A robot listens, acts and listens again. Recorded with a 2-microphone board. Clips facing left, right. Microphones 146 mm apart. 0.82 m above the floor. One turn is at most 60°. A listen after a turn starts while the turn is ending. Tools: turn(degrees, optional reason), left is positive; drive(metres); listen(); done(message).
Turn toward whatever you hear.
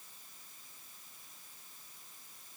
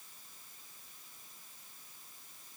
listen()
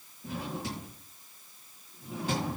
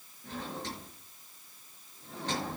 turn(degrees=30)
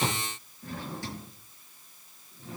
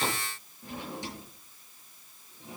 turn(degrees=-20, reason="So it is at 20° right.")
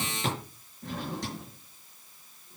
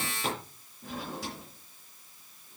done("Facing the drawer.")